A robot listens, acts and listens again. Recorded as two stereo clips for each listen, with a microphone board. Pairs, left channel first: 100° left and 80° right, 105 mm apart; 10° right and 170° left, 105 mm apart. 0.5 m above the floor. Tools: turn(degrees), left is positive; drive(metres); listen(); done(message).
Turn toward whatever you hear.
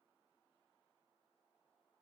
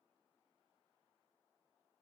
listen()
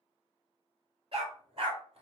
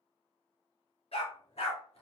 turn(degrees=-40)
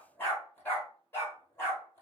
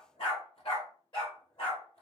turn(degrees=30)
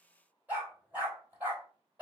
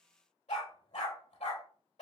done("Facing the dog barking, 2 to 4 m away.")